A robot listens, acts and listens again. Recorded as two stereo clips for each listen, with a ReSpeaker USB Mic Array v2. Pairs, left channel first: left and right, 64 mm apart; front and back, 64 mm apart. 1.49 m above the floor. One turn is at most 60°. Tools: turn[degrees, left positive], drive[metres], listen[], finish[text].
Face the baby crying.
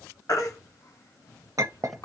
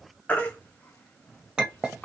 Thought: The baby crying: 65° left.
Action: turn[60]
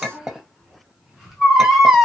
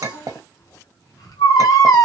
Action: finish[Found it: a baby crying, straight ahead.]